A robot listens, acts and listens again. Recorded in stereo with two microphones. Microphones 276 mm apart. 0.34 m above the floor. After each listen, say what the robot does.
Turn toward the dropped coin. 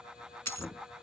Turn 75° right.
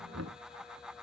Keep listening.
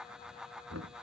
I heard a dropped coin, but can't make it out now. It was about straight ahead or 30° right.